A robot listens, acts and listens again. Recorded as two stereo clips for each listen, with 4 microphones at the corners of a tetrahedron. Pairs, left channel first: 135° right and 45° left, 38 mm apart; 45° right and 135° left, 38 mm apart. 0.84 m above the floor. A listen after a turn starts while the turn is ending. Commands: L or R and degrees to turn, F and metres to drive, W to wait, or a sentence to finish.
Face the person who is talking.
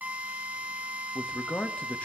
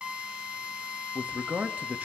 L170
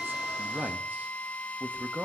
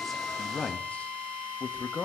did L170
Facing the man speaking, under 1 m away.